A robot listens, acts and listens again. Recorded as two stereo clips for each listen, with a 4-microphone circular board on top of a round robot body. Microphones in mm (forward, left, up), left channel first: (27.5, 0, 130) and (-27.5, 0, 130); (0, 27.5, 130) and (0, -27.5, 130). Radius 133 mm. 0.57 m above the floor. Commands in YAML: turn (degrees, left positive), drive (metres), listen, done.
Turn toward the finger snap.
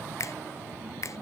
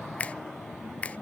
turn: 25
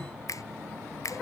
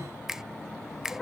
turn: -10
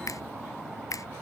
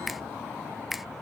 done: "Found it: a finger snap, straight ahead."